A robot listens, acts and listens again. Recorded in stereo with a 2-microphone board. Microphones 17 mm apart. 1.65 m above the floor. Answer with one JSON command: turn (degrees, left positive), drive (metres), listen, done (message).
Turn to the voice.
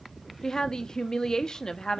{"turn": 40}
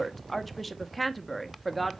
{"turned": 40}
{"done": "Facing the woman speaking."}